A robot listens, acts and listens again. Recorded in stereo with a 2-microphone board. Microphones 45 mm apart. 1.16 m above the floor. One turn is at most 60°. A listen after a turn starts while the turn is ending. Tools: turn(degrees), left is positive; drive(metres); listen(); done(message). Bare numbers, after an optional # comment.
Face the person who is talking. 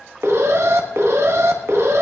listen()
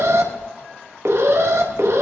listen()
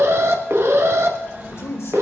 turn(60)
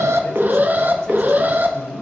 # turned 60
# So it is at 15° left.
turn(15)
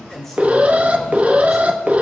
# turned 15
done("Facing the man speaking, over 4 m away.")